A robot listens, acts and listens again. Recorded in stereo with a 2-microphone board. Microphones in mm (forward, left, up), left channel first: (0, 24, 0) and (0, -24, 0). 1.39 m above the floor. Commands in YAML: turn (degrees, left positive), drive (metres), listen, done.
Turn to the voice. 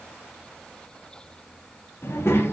turn: 60
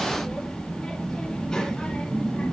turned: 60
turn: 15
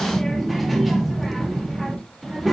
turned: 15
done: "Facing the child speaking."